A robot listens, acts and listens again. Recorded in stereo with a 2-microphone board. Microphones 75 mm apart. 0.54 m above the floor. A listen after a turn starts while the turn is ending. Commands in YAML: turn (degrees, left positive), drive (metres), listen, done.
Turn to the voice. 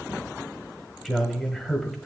turn: 30
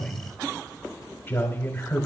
turn: 150
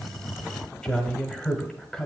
turn: 10
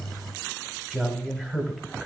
done: "Facing the man speaking."